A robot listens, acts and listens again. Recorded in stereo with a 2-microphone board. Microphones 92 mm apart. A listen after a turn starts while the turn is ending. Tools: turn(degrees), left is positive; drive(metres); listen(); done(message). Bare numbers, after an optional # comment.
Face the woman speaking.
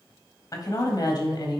# The woman speaking: about 50° left or 130° left.
turn(50)
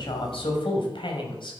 # So it is at 65° left.
turn(65)
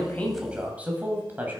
# The woman speaking is now 20° right.
turn(-20)
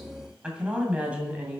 # The woman speaking is now 15° right.
turn(-15)
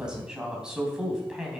# The woman speaking is now 10° right.
turn(-10)
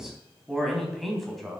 done("Facing the woman speaking, 2 to 4 m away.")